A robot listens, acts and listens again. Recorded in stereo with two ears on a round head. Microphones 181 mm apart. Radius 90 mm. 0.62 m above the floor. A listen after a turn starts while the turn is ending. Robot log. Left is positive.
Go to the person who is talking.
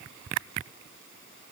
cmd idle
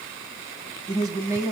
note: The woman speaking: about 15° right or 165° right.
cmd yaw -15
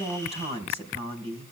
note: So it is at 150° right.
cmd yaw -150
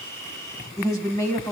note: The woman speaking is now 15° left.
cmd yaw +15
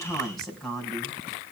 cmd fwd 1.0
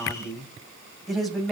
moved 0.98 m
cmd fwd 1.0
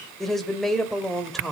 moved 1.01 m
cmd fwd 1.0
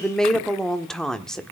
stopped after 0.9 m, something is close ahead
end: I am next to the woman speaking.